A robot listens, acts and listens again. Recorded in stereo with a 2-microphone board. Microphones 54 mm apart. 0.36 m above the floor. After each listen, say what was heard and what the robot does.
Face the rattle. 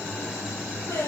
Keep listening.
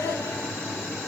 Keep listening.
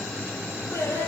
I can't make out a rattle to turn to.